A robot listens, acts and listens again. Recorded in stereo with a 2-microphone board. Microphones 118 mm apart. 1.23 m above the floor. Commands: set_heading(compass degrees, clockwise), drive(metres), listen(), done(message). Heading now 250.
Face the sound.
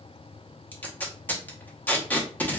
set_heading(220)
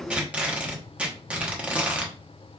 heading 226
set_heading(236)
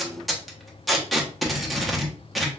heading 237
done("Facing the tape being pulled.")